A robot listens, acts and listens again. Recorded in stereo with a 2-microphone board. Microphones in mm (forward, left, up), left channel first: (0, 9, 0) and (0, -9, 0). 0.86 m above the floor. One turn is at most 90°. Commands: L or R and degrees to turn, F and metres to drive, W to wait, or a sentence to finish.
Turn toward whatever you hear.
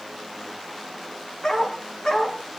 L45
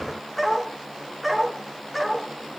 Facing the dog barking.